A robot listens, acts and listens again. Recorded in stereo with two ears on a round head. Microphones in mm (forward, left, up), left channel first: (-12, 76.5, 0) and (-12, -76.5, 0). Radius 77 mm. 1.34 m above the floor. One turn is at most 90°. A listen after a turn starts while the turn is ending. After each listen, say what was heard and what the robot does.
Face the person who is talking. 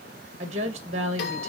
The woman speaking: about 40° right or 140° right. Turn 40° right.
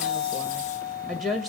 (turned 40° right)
Facing the woman speaking.